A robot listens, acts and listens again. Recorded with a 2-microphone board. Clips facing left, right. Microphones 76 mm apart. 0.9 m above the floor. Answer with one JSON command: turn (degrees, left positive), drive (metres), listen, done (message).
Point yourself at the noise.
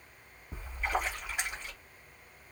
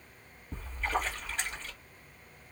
{"turn": 30}
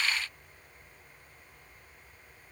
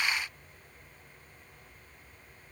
{"listen": true}
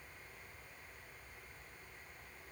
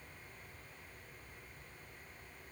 {"done": "I heard a splash, but can't make it out now. It was about 15° right or 135° left."}